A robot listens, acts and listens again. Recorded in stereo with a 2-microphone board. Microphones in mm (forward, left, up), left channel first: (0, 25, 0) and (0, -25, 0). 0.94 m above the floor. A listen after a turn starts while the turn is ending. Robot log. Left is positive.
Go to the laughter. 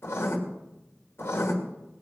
cmd idle
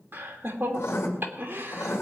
note: The laughter: about 40° right or 140° right.
cmd yaw -40
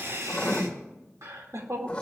note: So it is at 105° right.
cmd yaw -105
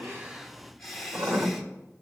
cmd fwd 1.0
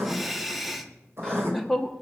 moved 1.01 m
cmd fwd 1.0
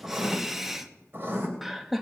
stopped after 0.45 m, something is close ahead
note: The laughter is now 10° right.
cmd yaw -10
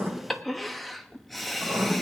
end: Arrived at the laughter, straight ahead.